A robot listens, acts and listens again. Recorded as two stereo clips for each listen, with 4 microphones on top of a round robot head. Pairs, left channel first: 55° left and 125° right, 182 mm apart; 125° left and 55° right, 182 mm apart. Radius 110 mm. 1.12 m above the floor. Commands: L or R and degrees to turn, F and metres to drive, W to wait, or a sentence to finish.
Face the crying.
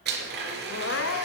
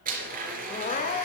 L75
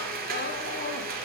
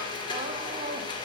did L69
L10
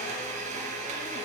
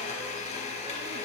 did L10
W
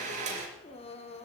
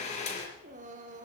Facing the crying, 1 to 2 m away.